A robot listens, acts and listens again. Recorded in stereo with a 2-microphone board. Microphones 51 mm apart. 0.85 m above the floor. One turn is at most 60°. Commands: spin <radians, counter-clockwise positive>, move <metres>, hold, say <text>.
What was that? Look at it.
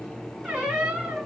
spin -0.35
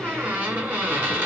spin -1.05
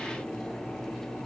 spin -1.05
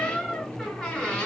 spin 0.26
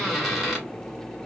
say Found it: a squeak, straight ahead, 1 to 2 m away.